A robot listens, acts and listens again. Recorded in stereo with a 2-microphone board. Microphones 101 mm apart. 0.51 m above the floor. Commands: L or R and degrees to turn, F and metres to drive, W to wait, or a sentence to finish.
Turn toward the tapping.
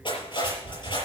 L90
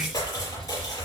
Facing the tapping, over 4 m away.